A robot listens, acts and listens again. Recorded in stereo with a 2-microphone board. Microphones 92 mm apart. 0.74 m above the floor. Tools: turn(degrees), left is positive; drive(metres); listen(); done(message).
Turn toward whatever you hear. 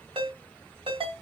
turn(degrees=-75)
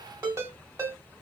turn(degrees=-30)
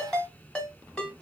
turn(degrees=10)
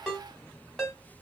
done("Found it: a ringtone, straight ahead.")